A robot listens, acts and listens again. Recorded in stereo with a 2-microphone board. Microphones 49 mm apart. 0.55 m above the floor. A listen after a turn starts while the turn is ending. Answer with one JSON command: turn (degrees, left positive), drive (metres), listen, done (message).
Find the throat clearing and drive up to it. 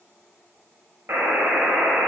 {"listen": true}
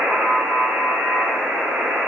{"listen": true}
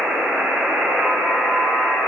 {"done": "I can't make out throat clearing to turn to."}